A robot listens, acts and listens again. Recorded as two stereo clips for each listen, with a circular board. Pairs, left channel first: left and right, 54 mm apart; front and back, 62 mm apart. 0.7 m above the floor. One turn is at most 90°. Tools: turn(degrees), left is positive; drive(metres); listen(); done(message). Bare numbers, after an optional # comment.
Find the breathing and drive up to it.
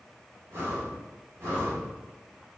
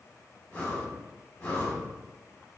# The breathing: 65° right.
turn(-65)
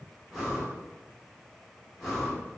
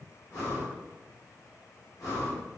drive(1.0)
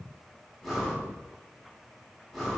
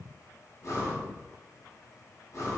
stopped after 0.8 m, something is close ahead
done("Arrived at the breathing, straight ahead.")